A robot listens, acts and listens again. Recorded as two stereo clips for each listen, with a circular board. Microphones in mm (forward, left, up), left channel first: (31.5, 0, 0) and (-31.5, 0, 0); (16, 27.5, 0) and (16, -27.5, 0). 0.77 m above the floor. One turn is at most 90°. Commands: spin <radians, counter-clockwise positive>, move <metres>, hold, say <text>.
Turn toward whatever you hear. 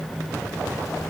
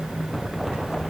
hold
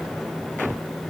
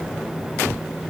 hold
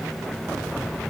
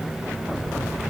say I can't make out anything.